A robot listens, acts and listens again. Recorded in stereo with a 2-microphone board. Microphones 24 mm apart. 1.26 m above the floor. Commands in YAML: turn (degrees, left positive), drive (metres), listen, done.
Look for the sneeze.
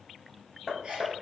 turn: -40
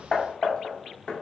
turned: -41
listen: true
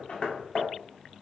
done: "I heard a sneeze, but can't make it out now. It was about straight ahead or 100° right."